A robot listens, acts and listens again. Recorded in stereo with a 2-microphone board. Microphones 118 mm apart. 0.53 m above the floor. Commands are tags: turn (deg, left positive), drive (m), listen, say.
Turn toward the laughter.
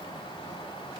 <listen/>
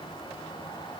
<listen/>
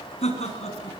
<turn deg="65"/>
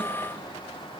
<listen/>
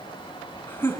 <turn deg="20"/>
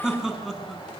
<say>Facing the laughter, over 4 m away.</say>